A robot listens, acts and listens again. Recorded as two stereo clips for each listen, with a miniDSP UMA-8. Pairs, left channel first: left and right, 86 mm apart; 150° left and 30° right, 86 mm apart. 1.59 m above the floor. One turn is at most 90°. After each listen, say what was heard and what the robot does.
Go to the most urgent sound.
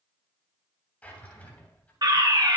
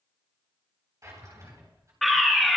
The fire alarm: 120° right. Turn 90° right.
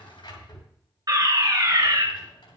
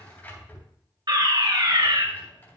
The fire alarm is now 55° right. Turn 55° right.
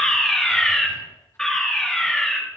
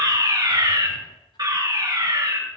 Drive 1.0 m forward.
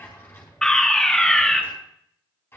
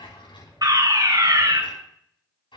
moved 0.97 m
The fire alarm is now 10° left. Turn 10° left.
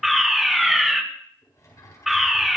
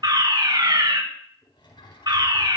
Drive 1.0 m forward.
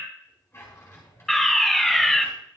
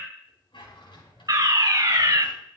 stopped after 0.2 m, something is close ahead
I am next to the fire alarm.